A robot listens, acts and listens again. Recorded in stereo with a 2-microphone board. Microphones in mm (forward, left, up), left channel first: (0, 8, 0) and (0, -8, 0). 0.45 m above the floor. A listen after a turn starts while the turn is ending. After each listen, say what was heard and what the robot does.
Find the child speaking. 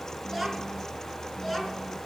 Turn 30° left.
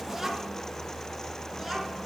So it is at 10° right. Turn 10° right.
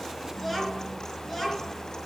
The child speaking is now 15° left. Turn 15° left.
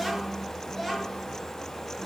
The child speaking is now 10° left. Turn 10° left.
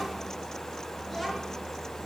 Facing the child speaking.